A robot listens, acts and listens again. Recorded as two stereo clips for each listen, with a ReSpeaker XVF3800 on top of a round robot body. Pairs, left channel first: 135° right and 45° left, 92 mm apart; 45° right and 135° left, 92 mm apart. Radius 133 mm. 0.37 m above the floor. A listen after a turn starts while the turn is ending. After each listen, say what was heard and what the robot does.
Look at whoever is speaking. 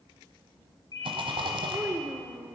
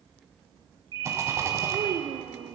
The child speaking: 115° left. Turn 115° left.
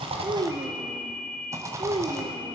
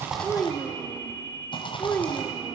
The child speaking is now 25° left. Turn 25° left.
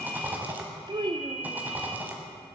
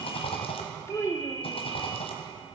The child speaking is now 15° left. Turn 15° left.
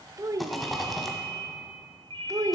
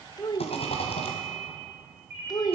Facing the child speaking, under 1 m away.